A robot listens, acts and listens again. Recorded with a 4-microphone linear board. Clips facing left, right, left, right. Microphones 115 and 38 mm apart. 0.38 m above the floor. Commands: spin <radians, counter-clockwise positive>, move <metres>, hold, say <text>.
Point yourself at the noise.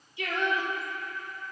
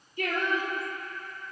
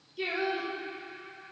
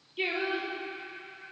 spin -0.87
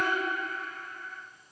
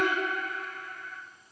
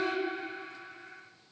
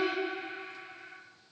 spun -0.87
spin -1.40
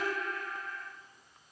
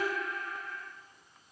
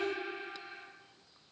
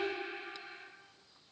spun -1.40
say Found it: singing, straight ahead, 1 to 2 m away.